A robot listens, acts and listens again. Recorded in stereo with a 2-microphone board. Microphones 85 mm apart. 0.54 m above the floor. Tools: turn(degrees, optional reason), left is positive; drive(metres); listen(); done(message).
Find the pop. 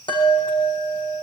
listen()
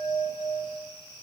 listen()
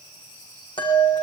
done("I can't make out a pop to turn to.")